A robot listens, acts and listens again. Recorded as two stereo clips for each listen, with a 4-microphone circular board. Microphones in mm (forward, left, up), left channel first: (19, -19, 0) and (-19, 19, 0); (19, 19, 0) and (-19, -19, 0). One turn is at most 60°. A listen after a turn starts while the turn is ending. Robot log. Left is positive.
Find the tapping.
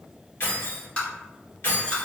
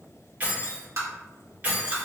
note: The tapping: 110° right.
cmd yaw -60
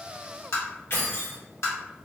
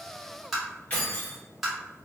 note: The tapping is now 50° right.
cmd yaw -50
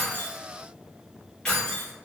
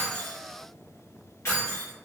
cmd idle
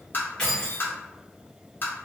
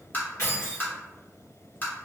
end: Found it: tapping, straight ahead.